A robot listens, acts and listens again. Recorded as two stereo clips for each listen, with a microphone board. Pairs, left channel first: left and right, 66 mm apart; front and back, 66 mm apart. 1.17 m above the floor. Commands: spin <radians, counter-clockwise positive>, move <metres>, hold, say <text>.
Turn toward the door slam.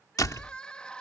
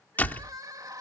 spin 1.05
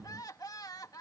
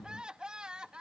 say I heard a door slam from this way, but can't make it out now.